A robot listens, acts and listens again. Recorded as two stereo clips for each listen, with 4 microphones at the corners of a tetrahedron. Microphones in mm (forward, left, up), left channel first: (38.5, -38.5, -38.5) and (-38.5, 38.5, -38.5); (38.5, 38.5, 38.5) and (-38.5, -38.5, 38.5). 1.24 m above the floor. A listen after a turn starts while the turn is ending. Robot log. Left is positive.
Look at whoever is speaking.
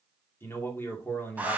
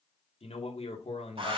note: The man speaking: 25° left.
cmd yaw +25
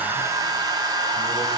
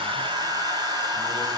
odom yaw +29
cmd idle
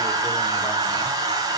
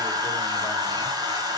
cmd idle
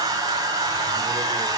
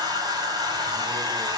end: I heard a man speaking from this way, but can't make it out now.